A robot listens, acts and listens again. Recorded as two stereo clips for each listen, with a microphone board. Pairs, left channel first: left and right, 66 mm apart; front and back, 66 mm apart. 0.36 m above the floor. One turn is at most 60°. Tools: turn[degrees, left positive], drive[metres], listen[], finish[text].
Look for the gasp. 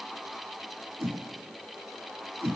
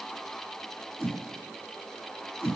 Action: listen[]
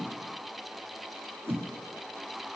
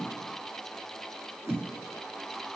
Action: listen[]
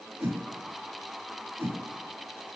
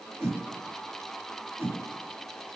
Action: finish[I can't make out a gasp to turn to.]